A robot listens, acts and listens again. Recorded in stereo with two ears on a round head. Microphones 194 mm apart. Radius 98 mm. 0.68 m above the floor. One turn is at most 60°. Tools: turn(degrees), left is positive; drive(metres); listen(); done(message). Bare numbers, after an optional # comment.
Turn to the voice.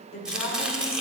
# The woman speaking: about 35° left or 145° left.
turn(35)
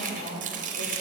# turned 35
# So it is at 110° left.
turn(60)
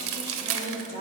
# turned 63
# The woman speaking is now 50° left.
turn(50)
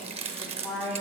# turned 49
done("Facing the woman speaking, 2 to 4 m away.")